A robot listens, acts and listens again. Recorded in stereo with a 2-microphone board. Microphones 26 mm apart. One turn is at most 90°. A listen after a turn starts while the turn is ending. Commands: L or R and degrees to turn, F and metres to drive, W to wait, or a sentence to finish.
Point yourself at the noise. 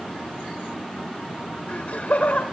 L55
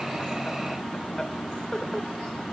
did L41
L10
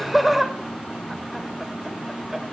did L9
R15
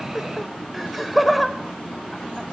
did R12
Found it: laughter, straight ahead, 2 to 4 m away.